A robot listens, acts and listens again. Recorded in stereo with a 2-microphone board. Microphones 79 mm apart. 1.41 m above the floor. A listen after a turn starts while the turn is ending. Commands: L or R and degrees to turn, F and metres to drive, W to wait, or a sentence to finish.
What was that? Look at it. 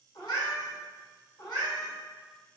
L65
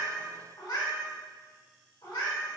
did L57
L70
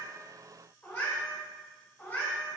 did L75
L30
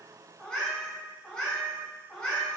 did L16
L15
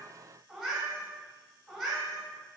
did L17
Found it: a cat meowing, straight ahead.